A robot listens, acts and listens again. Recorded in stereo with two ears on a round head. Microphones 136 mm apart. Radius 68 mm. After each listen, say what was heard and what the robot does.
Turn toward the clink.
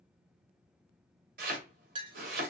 The clink: about 35° right or 145° right. Turn 35° right.
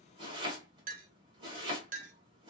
So it is at 105° right. Turn 105° right.
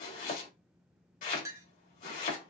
The clink is now 20° right. Turn 20° right.
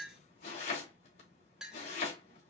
Facing the clink, under 1 m away.